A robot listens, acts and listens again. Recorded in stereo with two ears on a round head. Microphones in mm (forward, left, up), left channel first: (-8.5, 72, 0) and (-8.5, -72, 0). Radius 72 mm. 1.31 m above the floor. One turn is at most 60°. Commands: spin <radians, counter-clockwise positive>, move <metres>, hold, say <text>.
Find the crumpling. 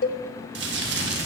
spin -1.05
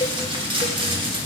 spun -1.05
spin -0.52
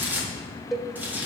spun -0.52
spin -0.17
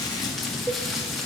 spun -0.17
say Facing the crumpling.